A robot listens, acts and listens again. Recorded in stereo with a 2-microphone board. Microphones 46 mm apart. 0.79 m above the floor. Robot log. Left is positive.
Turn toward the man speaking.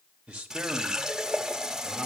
note: The man speaking: about 15° right or 165° right.
cmd yaw -15
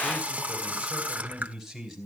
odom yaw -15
cmd yaw +30
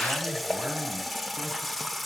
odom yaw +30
cmd idle
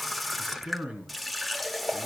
note: So it is at 30° right.
cmd yaw -30
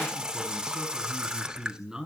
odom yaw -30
note: The man speaking is now 10° right.
cmd yaw -10
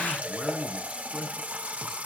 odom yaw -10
end: Facing the man speaking, over 4 m away.